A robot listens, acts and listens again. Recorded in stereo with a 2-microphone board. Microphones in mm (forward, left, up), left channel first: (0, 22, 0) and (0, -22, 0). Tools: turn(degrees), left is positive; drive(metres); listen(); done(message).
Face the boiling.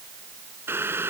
turn(degrees=-90)
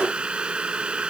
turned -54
turn(degrees=-25)
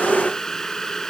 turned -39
turn(degrees=15)
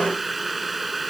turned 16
done("Found it: boiling, straight ahead.")